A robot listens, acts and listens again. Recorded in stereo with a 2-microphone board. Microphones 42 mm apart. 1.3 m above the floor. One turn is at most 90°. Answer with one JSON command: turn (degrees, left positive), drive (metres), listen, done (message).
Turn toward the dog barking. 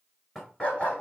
{"turn": 35}
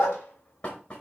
{"turn": 90}
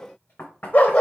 {"turn": 30}
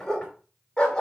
{"turn": 15}
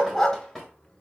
{"turn": 10}
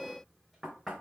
{"listen": true}
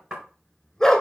{"done": "Facing the dog barking, 1 to 2 m away."}